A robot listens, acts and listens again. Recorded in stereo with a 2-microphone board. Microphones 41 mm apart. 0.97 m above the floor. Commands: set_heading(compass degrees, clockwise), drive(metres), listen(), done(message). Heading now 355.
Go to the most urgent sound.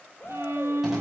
set_heading(300)
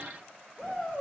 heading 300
drive(1.0)
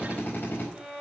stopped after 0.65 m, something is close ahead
listen()
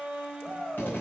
set_heading(310)
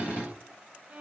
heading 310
listen()
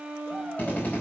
listen()
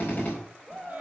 done("Something is in my way. I am facing the shout but have not reached it.")